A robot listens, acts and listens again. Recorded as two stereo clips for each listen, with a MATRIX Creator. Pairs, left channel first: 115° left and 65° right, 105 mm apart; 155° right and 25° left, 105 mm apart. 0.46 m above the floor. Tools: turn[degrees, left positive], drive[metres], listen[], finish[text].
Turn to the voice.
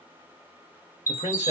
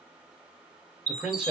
Thought: The man speaking: 105° left.
Action: turn[105]
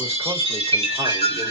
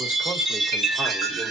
Action: listen[]
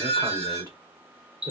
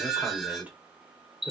Action: listen[]
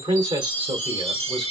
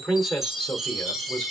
Thought: The man speaking is now 85° right.
Action: turn[-85]
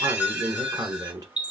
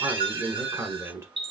Thought: The man speaking is now 25° right.
Action: turn[-25]
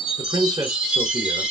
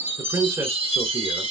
Thought: The man speaking is now 20° right.
Action: turn[-20]
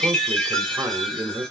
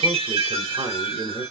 Action: finish[Facing the man speaking, 1 to 2 m away.]